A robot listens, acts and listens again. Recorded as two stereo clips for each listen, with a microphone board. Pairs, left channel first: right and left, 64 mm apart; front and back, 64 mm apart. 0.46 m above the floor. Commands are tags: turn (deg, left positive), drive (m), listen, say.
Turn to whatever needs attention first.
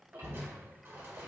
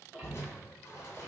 <listen/>
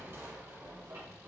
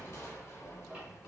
<listen/>
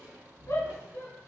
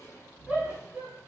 <turn deg="-110"/>
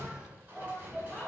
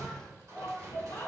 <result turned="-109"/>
<say>Found it: a shout, straight ahead.</say>